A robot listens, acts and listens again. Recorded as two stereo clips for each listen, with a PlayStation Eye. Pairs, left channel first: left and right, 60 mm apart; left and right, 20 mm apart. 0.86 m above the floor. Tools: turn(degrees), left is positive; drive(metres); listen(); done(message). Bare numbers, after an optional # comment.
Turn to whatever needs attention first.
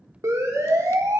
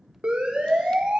# The siren: about 70° right or 110° right.
turn(-70)
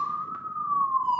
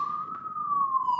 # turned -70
# So it is at 10° right.
turn(-10)
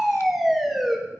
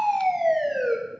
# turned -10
done("Found it: a siren, straight ahead, 2 to 4 m away.")